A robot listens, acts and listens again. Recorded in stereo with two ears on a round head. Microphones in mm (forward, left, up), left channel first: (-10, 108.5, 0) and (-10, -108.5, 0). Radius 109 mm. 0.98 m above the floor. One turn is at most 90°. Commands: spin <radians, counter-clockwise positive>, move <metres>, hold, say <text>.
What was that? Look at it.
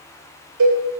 spin -1.57
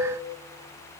hold
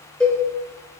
say Found it: a cowbell, straight ahead, 2 to 4 m away.